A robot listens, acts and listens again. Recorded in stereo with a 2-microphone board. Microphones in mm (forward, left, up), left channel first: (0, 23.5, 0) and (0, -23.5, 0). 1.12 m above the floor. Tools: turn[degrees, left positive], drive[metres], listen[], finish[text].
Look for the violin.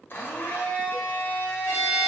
Action: turn[90]
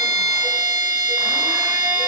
Action: finish[Found it: a violin, straight ahead, 1 to 2 m away.]